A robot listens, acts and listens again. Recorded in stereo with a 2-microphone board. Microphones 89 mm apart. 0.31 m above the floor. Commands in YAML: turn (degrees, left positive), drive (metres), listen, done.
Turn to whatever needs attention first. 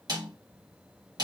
listen: true
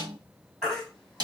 turn: 30
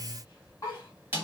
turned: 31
turn: 140
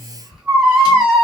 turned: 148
done: "Facing the baby crying, 1 to 2 m away."